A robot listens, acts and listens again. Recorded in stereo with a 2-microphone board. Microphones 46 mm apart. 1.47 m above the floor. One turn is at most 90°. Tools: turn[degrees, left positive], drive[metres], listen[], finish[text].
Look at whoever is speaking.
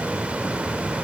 Action: listen[]
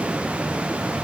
Action: listen[]
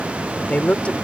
Thought: The woman speaking: about 25° left or 155° left.
Action: turn[25]
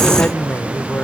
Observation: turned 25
Thought: So it is at 135° left.
Action: turn[90]
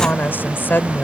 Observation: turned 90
Thought: The woman speaking is now 45° left.
Action: turn[45]
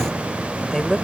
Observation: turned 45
Action: finish[Found it: a woman speaking, straight ahead.]